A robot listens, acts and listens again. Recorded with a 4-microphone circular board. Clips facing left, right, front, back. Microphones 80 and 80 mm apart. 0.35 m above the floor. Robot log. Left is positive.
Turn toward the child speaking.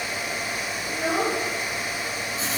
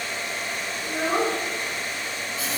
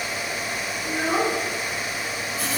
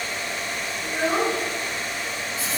note: The child speaking: 100° right.
cmd yaw -100
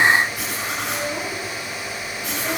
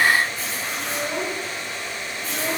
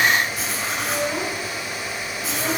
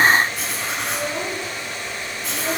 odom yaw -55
note: Nothing new. It was at 45° right.
cmd yaw -45
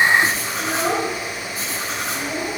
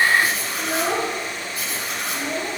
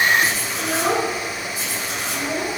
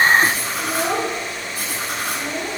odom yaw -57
note: The child speaking is now 10° left.
cmd yaw +10
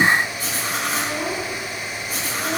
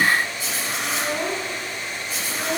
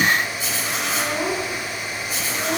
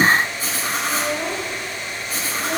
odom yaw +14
end: Found it: a child speaking, straight ahead, 2 to 4 m away.